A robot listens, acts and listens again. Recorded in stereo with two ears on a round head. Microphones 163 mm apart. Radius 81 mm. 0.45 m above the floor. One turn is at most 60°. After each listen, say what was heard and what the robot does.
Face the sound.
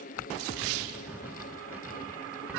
Turn 30° right.
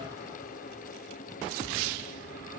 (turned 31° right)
Keep listening.
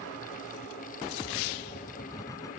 So it is at 20° left. Turn 20° left.
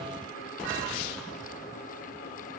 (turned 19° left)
Found it: writing, straight ahead.